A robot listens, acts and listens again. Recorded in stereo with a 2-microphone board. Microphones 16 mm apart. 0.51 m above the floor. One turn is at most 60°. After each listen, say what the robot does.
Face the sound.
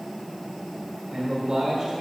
Turn 50° right.
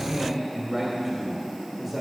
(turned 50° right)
Turn 15° right.
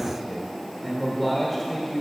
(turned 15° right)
Found it: a man speaking, straight ahead, 1 to 2 m away.